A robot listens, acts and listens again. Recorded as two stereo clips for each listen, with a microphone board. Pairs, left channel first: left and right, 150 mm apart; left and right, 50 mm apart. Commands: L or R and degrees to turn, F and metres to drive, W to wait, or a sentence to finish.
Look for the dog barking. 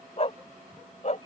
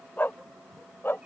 L50
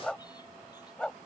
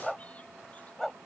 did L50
Facing the dog barking.